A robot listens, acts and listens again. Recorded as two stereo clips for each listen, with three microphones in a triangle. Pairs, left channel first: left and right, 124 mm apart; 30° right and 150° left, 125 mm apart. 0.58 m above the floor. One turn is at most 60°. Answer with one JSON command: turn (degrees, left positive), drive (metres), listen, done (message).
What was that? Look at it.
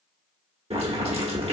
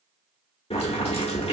{"turn": -60}
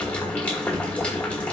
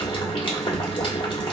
{"turn": 10}
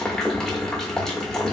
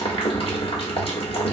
{"done": "Found it: boiling, straight ahead, 1 to 2 m away."}